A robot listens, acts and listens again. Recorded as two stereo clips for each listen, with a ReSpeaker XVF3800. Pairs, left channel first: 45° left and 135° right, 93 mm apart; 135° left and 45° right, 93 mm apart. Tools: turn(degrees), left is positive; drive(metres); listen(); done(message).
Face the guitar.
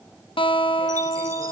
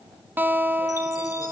turn(degrees=25)
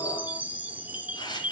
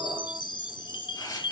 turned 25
listen()
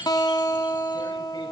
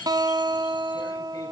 done("Found it: a guitar, straight ahead.")